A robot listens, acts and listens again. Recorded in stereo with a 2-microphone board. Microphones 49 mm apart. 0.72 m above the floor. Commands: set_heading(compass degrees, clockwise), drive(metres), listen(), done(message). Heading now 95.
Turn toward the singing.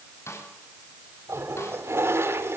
listen()
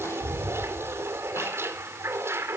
listen()
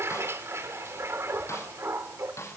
done("I can't make out singing, only a toilet flushing and a snare drum.")